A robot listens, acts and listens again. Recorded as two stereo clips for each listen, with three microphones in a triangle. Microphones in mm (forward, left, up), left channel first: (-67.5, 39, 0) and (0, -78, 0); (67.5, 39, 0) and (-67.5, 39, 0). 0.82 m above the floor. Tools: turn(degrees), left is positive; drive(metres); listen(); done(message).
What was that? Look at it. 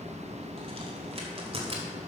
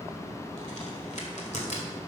turn(degrees=-20)
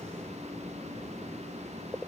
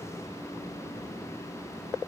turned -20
done("Facing where the crack came from. I can't hear it now.")